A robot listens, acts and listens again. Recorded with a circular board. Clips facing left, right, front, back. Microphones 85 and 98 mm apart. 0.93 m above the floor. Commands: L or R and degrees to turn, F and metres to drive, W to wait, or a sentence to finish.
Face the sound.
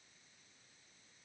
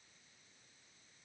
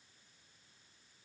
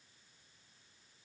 W
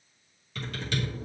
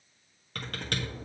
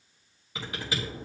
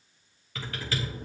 R70
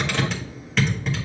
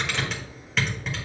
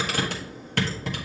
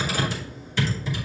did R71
Facing the typing on a keyboard, 1 to 2 m away.